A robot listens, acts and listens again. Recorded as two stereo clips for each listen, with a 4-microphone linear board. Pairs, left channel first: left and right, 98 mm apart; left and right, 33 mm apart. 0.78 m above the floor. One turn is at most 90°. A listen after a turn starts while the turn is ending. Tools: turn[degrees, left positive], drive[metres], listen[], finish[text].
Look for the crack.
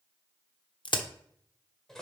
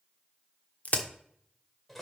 Thought: The crack: about 60° left or 120° left.
Action: turn[60]
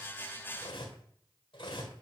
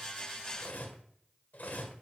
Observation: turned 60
Action: listen[]
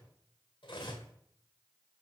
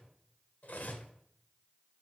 Action: finish[I heard a crack, but can't make it out now. It was about straight ahead or 60° left.]